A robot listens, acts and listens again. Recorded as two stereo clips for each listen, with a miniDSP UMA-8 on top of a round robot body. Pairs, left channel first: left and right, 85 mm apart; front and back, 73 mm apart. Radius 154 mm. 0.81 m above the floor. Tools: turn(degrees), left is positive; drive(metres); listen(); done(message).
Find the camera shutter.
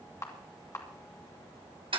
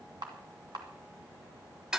turn(degrees=150)
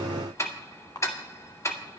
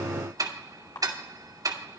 turn(degrees=40)
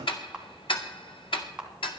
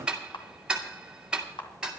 turn(degrees=-10)
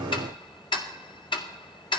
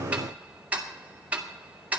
listen()
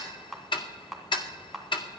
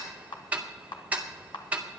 done("Found it: a camera shutter, straight ahead, 2 to 4 m away.")